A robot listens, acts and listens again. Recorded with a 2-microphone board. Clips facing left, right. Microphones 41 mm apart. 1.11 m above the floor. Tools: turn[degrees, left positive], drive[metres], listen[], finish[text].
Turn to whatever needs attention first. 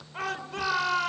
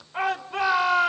Thought: The shout: about 25° right or 155° right.
Action: turn[-25]
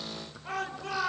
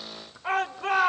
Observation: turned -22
Thought: So it is at 135° right.
Action: turn[-135]
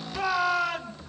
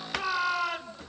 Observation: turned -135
Action: finish[Facing the shout.]